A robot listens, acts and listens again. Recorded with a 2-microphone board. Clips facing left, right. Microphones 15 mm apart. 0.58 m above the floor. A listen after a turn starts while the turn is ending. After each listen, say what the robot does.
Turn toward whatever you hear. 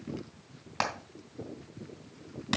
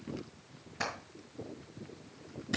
Turn 90° left.
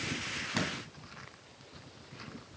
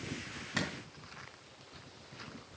Found it: hammering, straight ahead.